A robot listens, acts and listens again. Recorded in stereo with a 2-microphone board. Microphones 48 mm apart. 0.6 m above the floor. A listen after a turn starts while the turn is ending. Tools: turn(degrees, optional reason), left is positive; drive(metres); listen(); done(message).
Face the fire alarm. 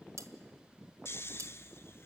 listen()
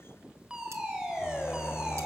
turn(degrees=-30)
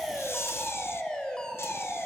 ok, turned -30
turn(degrees=15, reason="So it is at 15° left.")
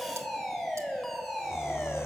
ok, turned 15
done("Found it: a fire alarm, straight ahead.")